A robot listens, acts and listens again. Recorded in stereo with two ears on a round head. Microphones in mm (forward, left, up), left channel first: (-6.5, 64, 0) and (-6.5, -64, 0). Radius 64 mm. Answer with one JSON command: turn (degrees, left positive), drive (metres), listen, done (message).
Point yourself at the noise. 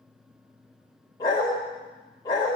{"turn": 30}
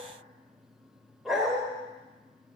{"done": "Found it: a dog barking, straight ahead, 1 to 2 m away."}